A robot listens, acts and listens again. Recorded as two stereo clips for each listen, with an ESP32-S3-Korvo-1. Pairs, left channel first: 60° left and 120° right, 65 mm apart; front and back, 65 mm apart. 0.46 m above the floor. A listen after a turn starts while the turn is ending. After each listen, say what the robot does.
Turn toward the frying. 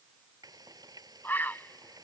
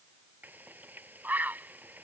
Turn 120° right.
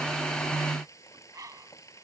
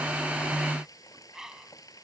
Turn 25° left.
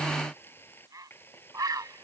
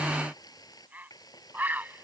Facing the frying.